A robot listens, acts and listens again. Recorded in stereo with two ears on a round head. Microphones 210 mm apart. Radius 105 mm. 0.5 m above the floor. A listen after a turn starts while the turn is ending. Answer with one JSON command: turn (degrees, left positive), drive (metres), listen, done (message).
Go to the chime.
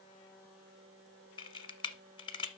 {"listen": true}
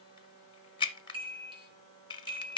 {"turn": -20}
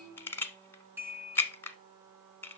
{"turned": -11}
{"turn": -10}
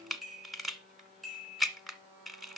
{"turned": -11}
{"drive": 1.0}
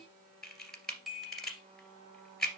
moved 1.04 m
{"drive": 1.0}
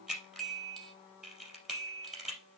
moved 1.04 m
{"drive": 1.0}
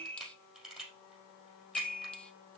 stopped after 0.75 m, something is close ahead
{"done": "I am next to the chime."}